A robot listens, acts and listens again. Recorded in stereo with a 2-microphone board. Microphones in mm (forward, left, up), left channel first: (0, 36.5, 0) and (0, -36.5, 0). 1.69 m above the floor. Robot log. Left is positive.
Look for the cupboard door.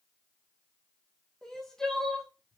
cmd idle
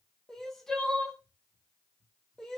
cmd idle
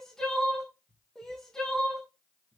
note: The cupboard door: about 45° left or 135° left.
cmd yaw +45
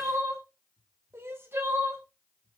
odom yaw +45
end: Found it: a cupboard door, straight ahead.